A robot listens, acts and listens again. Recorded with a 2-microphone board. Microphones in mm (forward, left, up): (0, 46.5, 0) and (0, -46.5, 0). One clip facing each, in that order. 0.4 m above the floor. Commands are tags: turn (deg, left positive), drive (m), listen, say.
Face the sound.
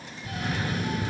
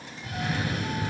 <turn deg="-55"/>
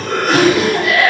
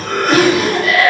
<turn deg="-65"/>
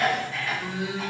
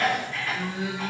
<turn deg="10"/>
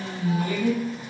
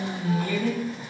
<say>Found it: a cough, straight ahead, 1 to 2 m away.</say>